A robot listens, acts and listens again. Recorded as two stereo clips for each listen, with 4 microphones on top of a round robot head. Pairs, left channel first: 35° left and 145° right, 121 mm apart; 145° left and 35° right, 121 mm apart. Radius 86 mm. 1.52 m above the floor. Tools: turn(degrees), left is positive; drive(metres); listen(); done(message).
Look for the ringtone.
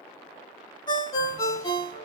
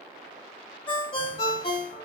turn(degrees=95)
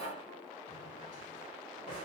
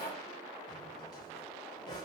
listen()
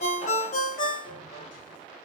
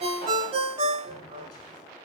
turn(degrees=10)
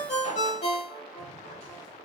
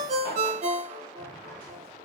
done("Found it: a ringtone, straight ahead, under 1 m away.")